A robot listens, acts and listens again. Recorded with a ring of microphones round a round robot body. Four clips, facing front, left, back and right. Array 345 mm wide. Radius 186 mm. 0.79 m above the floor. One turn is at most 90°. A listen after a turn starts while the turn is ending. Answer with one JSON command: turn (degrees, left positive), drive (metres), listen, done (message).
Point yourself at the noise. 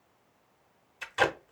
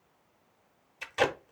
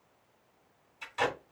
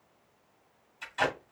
{"turn": 60}
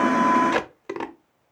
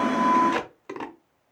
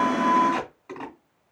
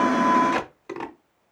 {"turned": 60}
{"done": "Facing the tape being pulled."}